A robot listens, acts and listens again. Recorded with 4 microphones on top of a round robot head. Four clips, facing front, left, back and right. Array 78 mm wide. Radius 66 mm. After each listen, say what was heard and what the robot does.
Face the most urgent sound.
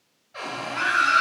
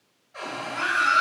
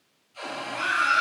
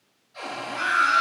The scream: 15° right. Turn 15° right.
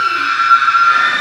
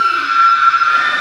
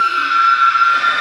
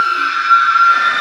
Facing the scream, 2 to 4 m away.